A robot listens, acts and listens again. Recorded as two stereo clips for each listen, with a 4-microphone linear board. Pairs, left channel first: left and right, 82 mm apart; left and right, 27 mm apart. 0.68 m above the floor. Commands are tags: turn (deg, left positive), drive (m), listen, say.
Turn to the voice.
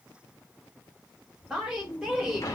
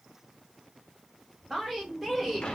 <turn deg="-30"/>
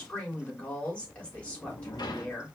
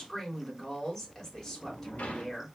<turn deg="15"/>
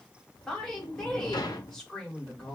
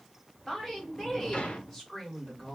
<turn deg="10"/>
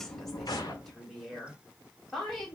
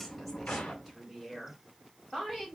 <say>Facing the woman speaking.</say>